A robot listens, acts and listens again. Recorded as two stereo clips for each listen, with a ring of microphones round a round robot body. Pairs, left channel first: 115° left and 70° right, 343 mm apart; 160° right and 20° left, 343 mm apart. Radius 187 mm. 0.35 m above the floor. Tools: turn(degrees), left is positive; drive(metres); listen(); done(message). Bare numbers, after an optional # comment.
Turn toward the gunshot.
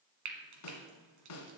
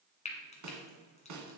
listen()
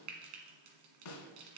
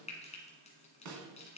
listen()
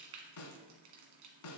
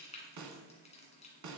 done("I can't make out a gunshot to turn to.")